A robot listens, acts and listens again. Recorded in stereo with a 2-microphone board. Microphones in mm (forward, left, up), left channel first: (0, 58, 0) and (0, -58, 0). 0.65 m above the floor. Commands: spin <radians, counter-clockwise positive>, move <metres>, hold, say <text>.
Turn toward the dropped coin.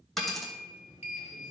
spin 0.52
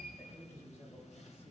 hold
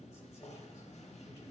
say I heard a dropped coin, but can't make it out now. It was about 30° right or 150° left.